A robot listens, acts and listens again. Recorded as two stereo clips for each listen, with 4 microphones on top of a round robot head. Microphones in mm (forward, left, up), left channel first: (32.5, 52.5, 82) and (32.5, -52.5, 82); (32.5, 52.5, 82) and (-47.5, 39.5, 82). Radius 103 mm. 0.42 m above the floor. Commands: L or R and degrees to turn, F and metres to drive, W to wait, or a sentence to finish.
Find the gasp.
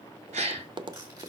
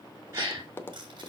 R105
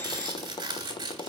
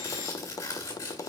Facing where the gasp came from. I can't hear it now.